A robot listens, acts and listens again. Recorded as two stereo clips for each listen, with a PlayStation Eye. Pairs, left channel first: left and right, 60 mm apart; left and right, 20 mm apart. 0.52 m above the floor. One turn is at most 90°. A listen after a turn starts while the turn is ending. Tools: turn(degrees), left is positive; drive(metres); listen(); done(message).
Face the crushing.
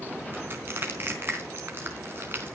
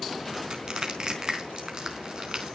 turn(degrees=-40)
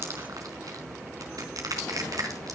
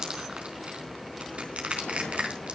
turn(degrees=-90)
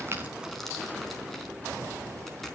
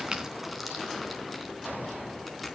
turn(degrees=-10)
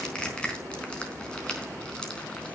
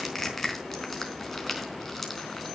turn(degrees=15)
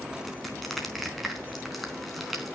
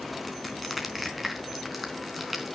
done("Found it: crushing, straight ahead.")